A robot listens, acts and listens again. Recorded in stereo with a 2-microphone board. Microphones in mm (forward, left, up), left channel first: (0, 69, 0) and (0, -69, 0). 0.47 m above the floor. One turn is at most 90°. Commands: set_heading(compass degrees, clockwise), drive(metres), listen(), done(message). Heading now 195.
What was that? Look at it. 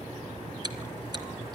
set_heading(225)
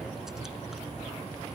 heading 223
listen()
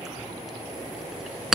done("Found it: chewing, straight ahead.")